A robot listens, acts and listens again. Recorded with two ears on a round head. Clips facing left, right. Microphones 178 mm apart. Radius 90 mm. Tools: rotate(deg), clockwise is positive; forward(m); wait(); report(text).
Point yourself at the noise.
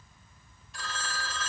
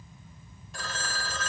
rotate(40)
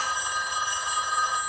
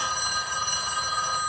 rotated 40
report("Facing the phone ringing, under 1 m away.")